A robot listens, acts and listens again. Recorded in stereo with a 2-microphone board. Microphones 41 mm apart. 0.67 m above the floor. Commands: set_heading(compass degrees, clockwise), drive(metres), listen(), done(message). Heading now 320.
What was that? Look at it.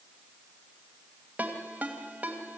set_heading(0)
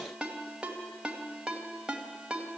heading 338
set_heading(358)
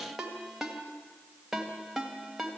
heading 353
done("Facing the ringtone, 2 to 4 m away.")